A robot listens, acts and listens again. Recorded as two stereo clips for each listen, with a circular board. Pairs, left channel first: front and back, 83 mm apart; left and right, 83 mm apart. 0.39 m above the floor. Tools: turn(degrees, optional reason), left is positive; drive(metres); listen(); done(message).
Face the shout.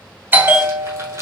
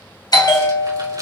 listen()
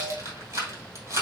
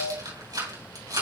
listen()
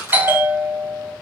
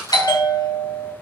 done("I can't make out a shout to turn to.")